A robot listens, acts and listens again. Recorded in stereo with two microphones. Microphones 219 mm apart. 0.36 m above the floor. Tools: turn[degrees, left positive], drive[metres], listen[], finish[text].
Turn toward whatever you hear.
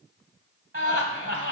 Thought: The laughter: about 50° right or 130° right.
Action: turn[-50]
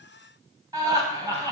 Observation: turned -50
Thought: So it is at 20° right.
Action: turn[-20]
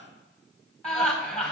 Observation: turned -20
Action: finish[Found it: laughter, straight ahead.]